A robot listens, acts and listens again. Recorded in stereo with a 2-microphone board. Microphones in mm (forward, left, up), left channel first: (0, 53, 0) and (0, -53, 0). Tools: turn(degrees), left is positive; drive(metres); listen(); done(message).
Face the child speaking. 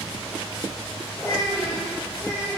turn(degrees=25)
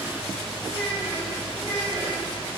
turn(degrees=40)
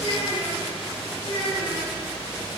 turn(degrees=110)
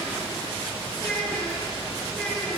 turn(degrees=10)
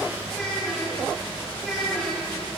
done("Found it: a child speaking, straight ahead, 2 to 4 m away.")